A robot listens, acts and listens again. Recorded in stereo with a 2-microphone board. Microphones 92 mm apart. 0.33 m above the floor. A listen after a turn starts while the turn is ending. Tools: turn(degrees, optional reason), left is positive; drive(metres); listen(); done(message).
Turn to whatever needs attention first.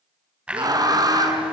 turn(degrees=-40, reason="The scream: about 40° right or 140° right.")
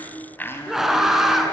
done("Found it: a scream, straight ahead, 2 to 4 m away.")